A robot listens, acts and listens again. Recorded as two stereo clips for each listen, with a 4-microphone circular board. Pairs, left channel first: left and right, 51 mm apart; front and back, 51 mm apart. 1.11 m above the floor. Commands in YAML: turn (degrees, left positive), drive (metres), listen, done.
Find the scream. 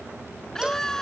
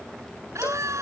turn: 170
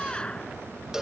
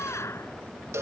turn: 20
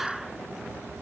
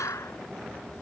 done: "Facing the scream."